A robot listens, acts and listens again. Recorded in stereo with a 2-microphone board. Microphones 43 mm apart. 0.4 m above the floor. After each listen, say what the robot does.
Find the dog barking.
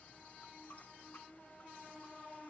Keep listening.
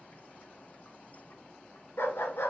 Turn 75° left.
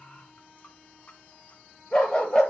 Turn 20° left.
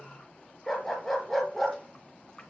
Facing the dog barking, 2 to 4 m away.